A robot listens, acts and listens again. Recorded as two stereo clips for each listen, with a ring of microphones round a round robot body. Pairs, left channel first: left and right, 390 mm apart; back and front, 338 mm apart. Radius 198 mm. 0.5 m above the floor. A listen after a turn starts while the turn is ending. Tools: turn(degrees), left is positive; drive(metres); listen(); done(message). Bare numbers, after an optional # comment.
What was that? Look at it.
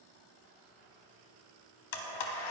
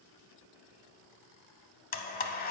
# The blender: 115° left.
turn(115)
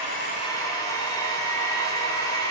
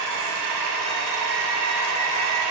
# The blender is now 10° left.
turn(10)
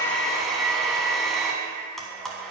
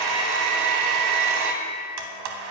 done("Found it: a blender, straight ahead.")